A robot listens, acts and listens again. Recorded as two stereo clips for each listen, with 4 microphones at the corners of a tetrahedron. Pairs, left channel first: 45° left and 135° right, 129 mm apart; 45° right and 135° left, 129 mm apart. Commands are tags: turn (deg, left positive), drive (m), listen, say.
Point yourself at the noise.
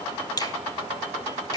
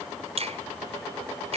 <turn deg="100"/>
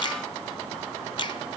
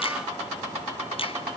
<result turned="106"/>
<say>Found it: a finger snap, straight ahead.</say>